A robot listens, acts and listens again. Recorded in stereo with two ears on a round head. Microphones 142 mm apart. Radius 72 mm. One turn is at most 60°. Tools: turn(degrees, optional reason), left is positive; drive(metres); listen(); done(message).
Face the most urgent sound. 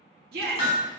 turn(degrees=-60, reason="The shout: about 70° right or 110° right.")
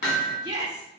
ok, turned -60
turn(degrees=-25, reason="So it is at 25° right.")
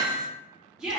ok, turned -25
done("Facing the shout.")